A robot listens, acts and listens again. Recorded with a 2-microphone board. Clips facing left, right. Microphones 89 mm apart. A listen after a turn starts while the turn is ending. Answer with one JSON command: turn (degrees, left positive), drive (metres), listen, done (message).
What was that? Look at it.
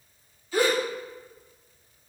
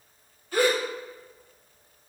{"turn": -60}
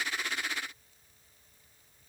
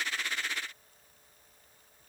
{"listen": true}
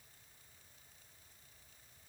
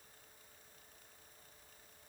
{"done": "I heard a gasp, but can't make it out now. It was about straight ahead or 60° right."}